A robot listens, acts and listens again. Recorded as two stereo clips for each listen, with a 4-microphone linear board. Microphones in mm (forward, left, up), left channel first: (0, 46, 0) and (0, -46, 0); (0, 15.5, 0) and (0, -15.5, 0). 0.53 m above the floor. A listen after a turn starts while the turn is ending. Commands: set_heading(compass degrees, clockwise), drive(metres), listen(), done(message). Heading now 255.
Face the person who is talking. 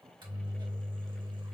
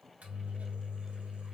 listen()
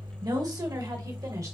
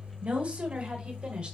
set_heading(295)
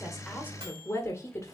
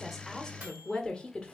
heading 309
set_heading(279)
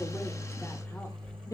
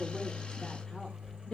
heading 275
set_heading(240)
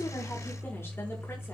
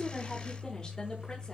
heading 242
listen()
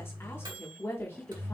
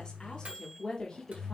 set_heading(217)
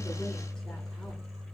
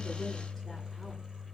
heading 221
listen()
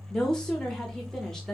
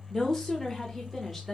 done("Facing the woman speaking, 1 to 2 m away.")